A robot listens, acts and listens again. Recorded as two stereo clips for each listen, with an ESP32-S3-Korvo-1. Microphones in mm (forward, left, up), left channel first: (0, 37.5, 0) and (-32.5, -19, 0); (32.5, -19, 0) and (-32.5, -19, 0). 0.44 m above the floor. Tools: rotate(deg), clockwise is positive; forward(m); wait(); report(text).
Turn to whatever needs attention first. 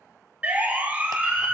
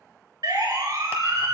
rotate(-175)
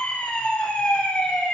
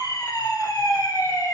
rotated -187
rotate(15)
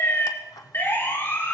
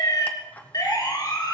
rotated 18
report("Facing the siren.")